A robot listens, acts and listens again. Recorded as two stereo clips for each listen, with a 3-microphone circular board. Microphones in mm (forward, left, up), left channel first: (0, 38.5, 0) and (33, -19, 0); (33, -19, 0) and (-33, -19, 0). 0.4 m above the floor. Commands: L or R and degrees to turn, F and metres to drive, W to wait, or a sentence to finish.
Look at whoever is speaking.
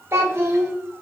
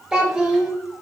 R100
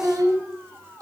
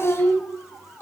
R45
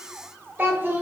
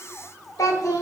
Facing the child speaking, under 1 m away.